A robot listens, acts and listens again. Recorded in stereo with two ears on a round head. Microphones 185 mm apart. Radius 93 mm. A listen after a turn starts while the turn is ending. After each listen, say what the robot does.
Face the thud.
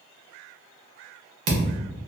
Turn 90° right.
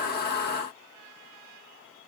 I heard a thud from this way, but can't make it out now.